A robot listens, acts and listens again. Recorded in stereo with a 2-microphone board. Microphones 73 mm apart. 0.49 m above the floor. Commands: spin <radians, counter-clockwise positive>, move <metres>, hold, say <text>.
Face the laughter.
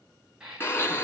spin -0.52
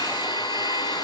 hold
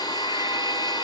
hold
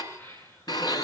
spin 0.52
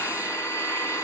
hold
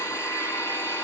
hold
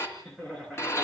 say Facing the laughter.